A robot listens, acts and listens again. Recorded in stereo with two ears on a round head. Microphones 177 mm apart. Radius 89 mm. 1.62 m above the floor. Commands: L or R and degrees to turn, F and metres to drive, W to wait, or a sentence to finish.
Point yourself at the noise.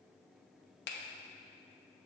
L55
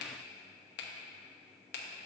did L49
L65
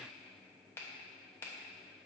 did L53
L15
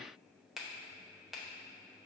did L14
Found it: a finger snap, straight ahead, under 1 m away.